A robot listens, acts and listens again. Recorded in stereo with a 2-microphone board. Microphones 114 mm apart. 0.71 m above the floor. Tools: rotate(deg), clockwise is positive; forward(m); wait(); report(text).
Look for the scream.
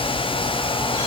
wait()
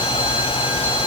wait()
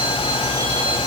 report("I can't make out a scream.")